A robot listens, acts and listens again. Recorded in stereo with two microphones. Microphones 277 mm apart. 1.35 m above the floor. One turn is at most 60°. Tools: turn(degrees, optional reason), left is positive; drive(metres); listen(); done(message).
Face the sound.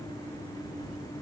listen()
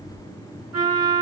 turn(degrees=-60, reason="The trumpet: about 70° right or 110° right.")
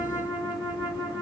turn(degrees=-10, reason="So it is at 10° right.")
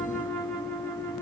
done("Facing the trumpet.")